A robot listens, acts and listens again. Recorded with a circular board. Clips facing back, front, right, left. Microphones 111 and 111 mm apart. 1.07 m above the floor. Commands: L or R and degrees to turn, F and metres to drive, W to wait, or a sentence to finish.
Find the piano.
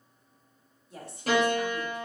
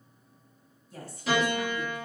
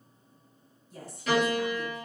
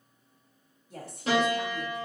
L145
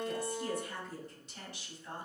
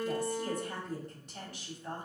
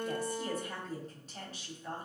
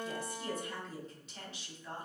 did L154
Found it: a piano, straight ahead.